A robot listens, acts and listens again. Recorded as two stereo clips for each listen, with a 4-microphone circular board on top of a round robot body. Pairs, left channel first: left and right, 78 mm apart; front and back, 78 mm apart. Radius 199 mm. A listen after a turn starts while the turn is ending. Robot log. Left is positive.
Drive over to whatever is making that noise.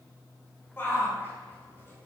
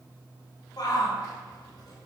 note: The shout: 30° left.
cmd yaw +30
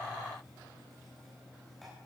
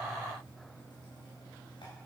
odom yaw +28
cmd idle
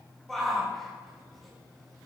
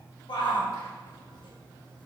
cmd fwd 1.0
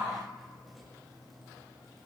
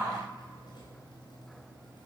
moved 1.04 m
cmd idle
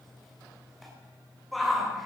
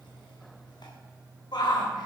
cmd fwd 1.0
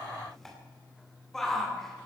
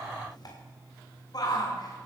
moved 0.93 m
cmd fwd 1.0
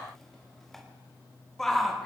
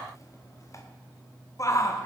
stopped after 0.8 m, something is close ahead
end: Arrived at the shout, straight ahead.